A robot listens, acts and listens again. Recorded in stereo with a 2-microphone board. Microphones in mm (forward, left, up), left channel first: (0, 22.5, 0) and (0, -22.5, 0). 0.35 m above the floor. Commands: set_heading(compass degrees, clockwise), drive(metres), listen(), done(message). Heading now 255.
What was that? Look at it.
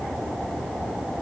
listen()
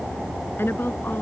set_heading(200)
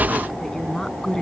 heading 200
set_heading(185)
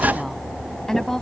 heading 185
set_heading(175)
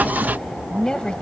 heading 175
set_heading(155)
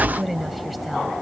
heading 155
done("Found it: a woman speaking, straight ahead.")